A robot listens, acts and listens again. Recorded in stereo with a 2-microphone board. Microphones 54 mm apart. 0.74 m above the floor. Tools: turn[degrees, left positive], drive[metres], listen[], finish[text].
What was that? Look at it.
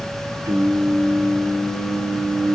Thought: The singing: about 65° right or 115° right.
Action: turn[-65]
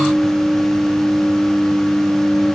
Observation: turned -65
Action: finish[Found it: singing, straight ahead.]